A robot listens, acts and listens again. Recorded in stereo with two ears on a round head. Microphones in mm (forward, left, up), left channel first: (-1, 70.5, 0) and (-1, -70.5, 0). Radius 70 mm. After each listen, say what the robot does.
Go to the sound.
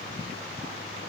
Keep listening.
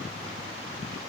Keep listening.
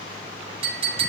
Turn 40° right.
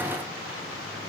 Keep listening.
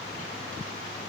Keep listening.
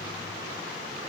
I heard a clink, but can't make it out now. It was about straight ahead or 100° right. I did not reach it.